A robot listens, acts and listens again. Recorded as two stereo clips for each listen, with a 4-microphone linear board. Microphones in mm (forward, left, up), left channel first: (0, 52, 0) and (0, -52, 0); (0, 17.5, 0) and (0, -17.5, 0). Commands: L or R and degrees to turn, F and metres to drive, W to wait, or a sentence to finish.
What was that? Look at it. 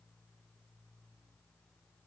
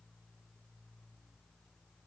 W
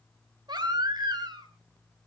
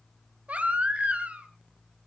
R45
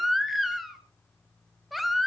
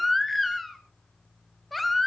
Facing the baby crying.